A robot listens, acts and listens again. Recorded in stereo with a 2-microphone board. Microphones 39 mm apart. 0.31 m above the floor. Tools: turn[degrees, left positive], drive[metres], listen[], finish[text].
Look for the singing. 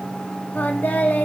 Thought: The singing: about 50° left or 130° left.
Action: turn[50]
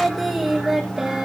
Thought: So it is at 15° right.
Action: turn[-15]
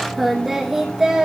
Thought: The singing is now 20° right.
Action: turn[-20]
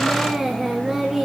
Thought: The singing is now 20° right.
Action: turn[-20]
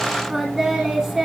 Thought: The singing is now 15° right.
Action: turn[-15]
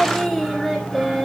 Action: finish[Facing the singing, 2 to 4 m away.]